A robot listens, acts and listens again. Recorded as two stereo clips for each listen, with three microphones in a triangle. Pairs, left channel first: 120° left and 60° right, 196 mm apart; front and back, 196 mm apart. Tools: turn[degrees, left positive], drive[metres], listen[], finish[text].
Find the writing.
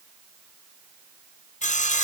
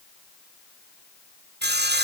Action: listen[]
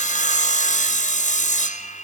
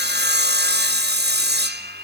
Action: listen[]
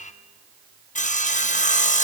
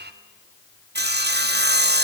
Action: finish[I can't make out writing, only sawing.]